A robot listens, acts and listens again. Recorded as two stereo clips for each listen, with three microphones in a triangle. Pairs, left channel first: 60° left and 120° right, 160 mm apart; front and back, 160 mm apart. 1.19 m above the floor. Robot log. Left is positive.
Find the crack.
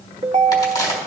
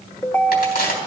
end: Found it: a crack, straight ahead.